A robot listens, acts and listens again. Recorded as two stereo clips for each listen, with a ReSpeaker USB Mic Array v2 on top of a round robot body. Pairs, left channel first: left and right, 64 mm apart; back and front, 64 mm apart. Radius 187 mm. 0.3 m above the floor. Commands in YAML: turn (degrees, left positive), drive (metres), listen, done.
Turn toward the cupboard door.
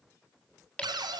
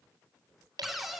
turn: -85
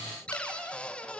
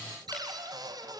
turn: 15
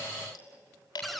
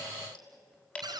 done: "Found it: a cupboard door, straight ahead, 1 to 2 m away."